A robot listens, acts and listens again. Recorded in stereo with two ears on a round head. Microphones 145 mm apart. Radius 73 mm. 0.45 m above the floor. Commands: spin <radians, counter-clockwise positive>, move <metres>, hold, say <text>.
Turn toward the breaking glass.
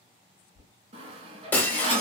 spin 0.52
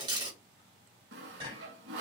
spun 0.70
spin -0.44
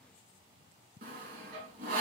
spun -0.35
say I heard breaking glass from this way, but can't make it out now.